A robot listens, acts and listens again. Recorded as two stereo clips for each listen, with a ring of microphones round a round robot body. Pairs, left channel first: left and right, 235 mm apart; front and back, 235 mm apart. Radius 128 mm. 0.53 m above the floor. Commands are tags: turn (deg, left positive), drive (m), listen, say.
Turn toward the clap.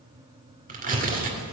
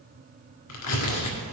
<listen/>
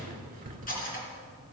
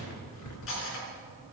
<listen/>
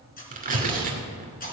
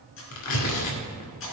<say>I can't make out a clap to turn to.</say>